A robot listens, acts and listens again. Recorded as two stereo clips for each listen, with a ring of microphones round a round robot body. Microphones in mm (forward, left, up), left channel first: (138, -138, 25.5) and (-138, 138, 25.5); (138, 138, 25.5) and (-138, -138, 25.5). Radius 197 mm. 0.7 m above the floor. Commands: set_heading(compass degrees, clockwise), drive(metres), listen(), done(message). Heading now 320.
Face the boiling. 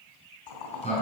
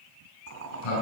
set_heading(35)
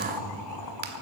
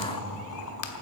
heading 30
listen()
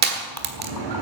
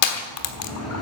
listen()
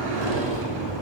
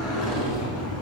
done("I heard boiling from this way, but can't make it out now.")